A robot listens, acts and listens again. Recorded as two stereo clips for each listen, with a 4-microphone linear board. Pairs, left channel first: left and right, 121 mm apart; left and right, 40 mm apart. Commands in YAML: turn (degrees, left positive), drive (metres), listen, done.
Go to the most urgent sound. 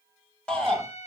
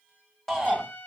turn: 30
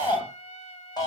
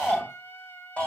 turn: 140
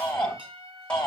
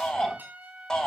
turn: 10
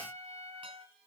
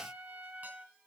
listen: true
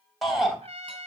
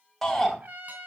drive: 1.0
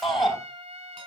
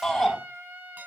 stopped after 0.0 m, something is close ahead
done: "Something is in my way. I am facing the shout but have not reached it."